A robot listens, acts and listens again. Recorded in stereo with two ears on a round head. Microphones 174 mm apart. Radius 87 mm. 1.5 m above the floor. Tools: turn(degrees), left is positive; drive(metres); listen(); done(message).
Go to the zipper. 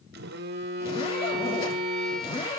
turn(degrees=30)
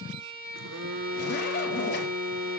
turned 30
turn(degrees=120)
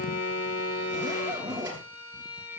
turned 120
turn(degrees=-20)
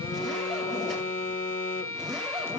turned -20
drive(metres=1.0)
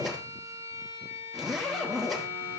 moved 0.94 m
drive(metres=1.0)
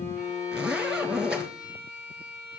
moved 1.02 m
drive(metres=1.0)
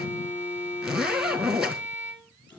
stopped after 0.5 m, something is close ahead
done("I am next to the zipper.")